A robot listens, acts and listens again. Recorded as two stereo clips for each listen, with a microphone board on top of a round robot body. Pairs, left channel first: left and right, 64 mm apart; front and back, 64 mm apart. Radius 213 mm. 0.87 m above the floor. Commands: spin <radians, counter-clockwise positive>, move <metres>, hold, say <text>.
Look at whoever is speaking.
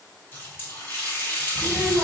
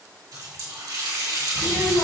spin -0.17
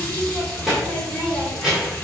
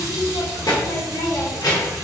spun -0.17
say Facing the child speaking.